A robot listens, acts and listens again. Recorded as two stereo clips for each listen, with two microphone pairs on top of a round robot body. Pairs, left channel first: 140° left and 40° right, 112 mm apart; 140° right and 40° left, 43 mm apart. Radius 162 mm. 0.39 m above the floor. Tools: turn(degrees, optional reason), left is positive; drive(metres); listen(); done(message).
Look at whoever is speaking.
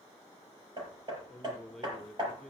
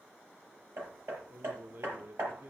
turn(degrees=60, reason="The man speaking: 60° left.")
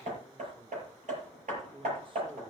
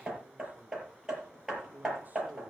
done("Found it: a man speaking, straight ahead, 1 to 2 m away.")